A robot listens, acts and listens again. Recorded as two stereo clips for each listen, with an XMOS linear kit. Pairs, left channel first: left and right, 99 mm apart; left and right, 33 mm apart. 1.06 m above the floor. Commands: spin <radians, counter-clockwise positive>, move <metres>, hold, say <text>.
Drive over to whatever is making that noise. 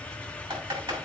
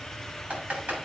spin -0.96
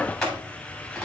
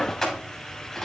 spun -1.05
move 1.0
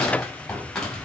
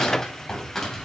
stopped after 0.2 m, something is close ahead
say Something is in my way. I am facing the typing on a keyboard but have not reached it.